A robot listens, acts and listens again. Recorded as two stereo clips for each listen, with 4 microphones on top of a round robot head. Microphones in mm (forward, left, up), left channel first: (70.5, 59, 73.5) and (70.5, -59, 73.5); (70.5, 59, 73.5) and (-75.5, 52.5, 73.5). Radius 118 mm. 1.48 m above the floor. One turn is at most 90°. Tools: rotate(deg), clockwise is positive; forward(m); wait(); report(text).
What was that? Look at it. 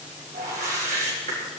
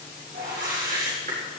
rotate(90)
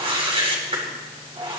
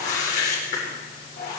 rotate(45)
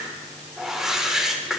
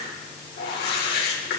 report("Facing the whoosh, over 4 m away.")